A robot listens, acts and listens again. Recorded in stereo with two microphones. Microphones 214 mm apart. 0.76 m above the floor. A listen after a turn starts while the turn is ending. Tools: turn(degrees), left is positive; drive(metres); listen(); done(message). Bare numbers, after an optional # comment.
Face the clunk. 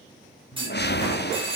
# The clunk: about 25° right or 155° right.
turn(-25)
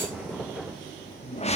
listen()
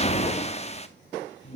done("I heard a clunk, but can't make it out now. It was about straight ahead or 130° right.")